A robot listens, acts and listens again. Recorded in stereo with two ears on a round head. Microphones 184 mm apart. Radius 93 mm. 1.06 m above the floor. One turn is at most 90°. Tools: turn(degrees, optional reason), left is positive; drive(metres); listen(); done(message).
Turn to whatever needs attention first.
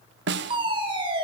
turn(degrees=-25, reason="The fire alarm: about 25° right or 155° right.")
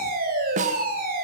turn(degrees=-90, reason="So it is at 130° right.")
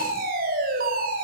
turn(degrees=-45, reason="The fire alarm is now 45° right.")
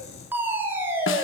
turn(degrees=-10, reason="The fire alarm is now 10° right.")
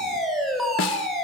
done("Found it: a fire alarm, straight ahead, over 4 m away.")